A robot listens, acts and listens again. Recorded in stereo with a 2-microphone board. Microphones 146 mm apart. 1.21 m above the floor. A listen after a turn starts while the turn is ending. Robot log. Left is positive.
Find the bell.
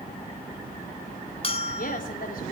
note: The bell: about 40° left or 140° left.
cmd yaw +40
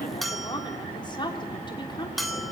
end: Facing the bell, 2 to 4 m away.